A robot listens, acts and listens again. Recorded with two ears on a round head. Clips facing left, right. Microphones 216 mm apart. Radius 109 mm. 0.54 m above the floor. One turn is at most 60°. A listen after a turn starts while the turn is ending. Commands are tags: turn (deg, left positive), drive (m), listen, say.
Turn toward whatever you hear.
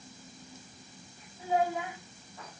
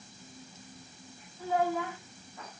<turn deg="30"/>
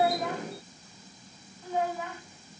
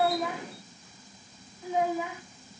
<turn deg="-15"/>
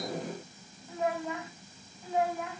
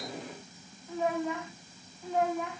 <say>Facing the child speaking, 2 to 4 m away.</say>